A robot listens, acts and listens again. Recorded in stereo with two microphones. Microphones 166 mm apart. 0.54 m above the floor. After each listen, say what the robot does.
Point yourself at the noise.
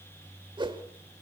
Turn 30° right.
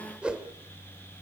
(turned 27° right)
Facing the whoosh.